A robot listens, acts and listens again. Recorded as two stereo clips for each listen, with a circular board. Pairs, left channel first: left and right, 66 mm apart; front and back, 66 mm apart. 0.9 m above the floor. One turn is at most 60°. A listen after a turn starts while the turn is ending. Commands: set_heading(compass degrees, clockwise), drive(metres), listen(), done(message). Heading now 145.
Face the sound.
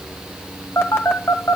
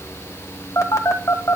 set_heading(105)
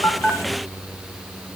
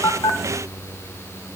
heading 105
listen()
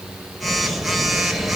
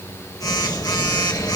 done("Facing the phone buzzing.")